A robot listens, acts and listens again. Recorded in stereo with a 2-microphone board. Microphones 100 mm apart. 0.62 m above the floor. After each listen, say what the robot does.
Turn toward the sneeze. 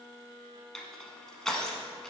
Keep listening.
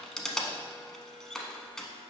Keep listening.
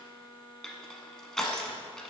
I can't make out a sneeze, only crushing.